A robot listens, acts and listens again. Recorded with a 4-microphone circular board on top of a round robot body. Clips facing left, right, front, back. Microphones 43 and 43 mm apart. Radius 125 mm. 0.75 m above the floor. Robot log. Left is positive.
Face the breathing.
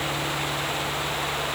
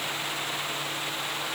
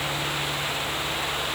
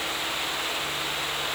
cmd idle
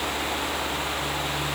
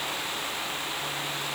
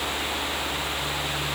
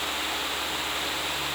cmd idle
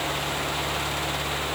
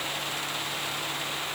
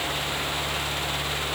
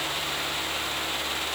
end: I can't make out breathing.